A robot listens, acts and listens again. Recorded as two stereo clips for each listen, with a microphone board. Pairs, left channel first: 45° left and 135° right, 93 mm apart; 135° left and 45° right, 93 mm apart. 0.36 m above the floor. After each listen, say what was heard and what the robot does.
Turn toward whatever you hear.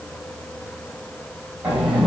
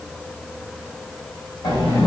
The sliding door: 155° left. Turn 155° left.
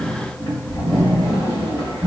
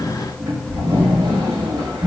Facing the sliding door.